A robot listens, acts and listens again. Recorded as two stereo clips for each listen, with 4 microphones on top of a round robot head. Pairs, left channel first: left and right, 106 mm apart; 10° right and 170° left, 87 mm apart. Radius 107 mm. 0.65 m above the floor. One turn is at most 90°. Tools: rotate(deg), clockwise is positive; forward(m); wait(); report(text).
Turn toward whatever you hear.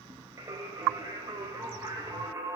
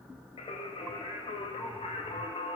rotate(25)
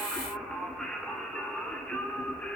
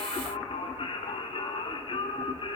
rotate(-10)
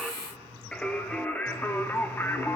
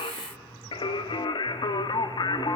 rotate(-20)
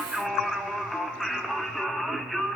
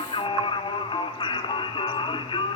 report("Found it: singing, straight ahead, 1 to 2 m away.")